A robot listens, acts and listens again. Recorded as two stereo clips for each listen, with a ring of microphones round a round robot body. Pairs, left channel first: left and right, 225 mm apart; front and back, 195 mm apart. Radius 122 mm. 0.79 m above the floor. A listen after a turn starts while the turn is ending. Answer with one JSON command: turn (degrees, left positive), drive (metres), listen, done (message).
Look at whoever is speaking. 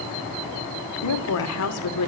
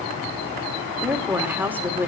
{"turn": 100}
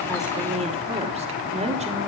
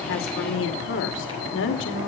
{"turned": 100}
{"turn": -30}
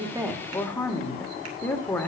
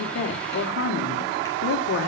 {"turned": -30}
{"done": "Facing the woman speaking."}